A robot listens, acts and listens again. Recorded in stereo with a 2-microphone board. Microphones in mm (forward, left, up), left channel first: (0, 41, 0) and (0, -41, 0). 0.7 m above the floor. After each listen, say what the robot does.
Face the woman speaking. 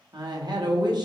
Turn 60° right.
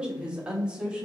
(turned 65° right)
Turn 15° right.
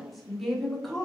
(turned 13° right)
Found it: a woman speaking, straight ahead.